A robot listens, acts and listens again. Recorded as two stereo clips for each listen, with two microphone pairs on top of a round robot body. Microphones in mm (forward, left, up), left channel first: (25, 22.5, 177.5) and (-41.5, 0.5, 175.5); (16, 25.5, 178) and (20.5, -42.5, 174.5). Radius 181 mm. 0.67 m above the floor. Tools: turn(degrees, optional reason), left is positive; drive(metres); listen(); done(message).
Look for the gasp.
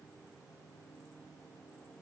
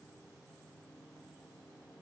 listen()
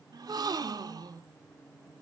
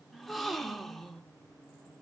turn(degrees=-175, reason="The gasp: 175° right.")
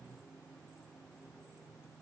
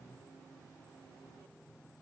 done("I heard a gasp from this way, but can't make it out now.")